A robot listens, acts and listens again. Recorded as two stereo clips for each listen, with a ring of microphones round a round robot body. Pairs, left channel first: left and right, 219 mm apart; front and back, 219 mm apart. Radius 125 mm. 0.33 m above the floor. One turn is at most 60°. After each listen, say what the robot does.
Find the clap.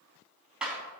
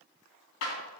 Facing the clap, 2 to 4 m away.